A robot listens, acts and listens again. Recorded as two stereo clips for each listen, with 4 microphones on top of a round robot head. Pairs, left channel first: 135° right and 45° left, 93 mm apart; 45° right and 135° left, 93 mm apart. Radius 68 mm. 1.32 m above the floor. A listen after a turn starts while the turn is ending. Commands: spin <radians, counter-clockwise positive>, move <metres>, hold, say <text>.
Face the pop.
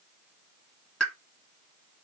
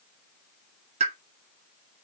spin 2.44
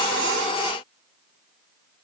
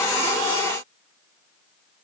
say Facing where the pop came from. I can't hear it now.